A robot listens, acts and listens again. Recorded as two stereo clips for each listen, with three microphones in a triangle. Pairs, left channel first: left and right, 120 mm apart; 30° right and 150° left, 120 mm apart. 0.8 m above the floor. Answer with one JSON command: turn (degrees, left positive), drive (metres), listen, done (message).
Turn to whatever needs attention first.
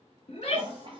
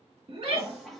{"turn": 120}
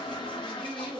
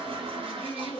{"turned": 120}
{"done": "Facing the shout, 1 to 2 m away."}